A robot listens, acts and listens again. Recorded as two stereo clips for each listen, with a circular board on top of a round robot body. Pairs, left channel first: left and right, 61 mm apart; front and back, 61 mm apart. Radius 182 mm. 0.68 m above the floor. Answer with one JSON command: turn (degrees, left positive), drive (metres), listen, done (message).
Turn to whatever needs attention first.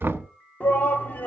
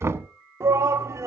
{"turn": 150}
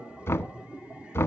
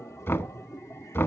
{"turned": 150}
{"listen": true}
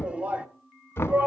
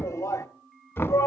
{"turn": -20}
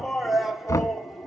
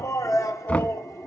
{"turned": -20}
{"done": "Found it: a shout, straight ahead."}